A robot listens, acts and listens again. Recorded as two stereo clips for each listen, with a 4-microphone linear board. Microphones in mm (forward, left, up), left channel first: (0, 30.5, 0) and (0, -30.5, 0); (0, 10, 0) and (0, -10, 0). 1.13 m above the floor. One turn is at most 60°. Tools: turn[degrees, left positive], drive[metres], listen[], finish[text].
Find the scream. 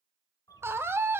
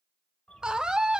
Thought: The scream: about 40° right or 140° right.
Action: turn[-40]
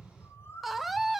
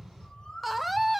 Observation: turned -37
Action: finish[Facing the scream, under 1 m away.]